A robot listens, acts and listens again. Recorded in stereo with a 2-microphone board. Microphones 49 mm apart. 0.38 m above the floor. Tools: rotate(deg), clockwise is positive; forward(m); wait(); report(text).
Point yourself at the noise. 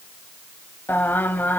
rotate(-40)
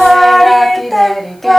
report("Facing the singing.")